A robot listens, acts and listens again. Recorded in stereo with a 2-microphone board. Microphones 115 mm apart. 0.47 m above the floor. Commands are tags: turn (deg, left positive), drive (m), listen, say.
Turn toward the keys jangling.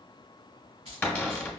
<turn deg="-55"/>
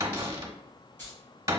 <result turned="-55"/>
<turn deg="20"/>
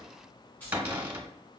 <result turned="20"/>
<turn deg="15"/>
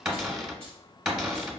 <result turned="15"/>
<listen/>
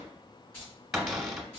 <turn deg="10"/>
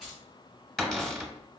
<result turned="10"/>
<say>Found it: keys jangling, straight ahead, 2 to 4 m away.</say>